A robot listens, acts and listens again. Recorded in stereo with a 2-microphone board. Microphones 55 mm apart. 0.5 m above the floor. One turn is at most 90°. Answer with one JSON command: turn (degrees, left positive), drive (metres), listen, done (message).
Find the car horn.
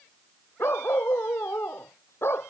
{"listen": true}
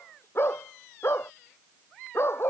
{"listen": true}
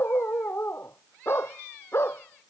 {"done": "I can't make out a car horn to turn to."}